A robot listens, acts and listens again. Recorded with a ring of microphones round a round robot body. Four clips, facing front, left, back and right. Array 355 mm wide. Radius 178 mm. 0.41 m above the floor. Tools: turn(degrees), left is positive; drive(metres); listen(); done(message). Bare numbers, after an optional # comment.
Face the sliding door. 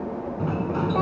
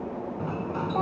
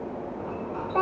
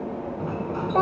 done("Found it: a sliding door, straight ahead.")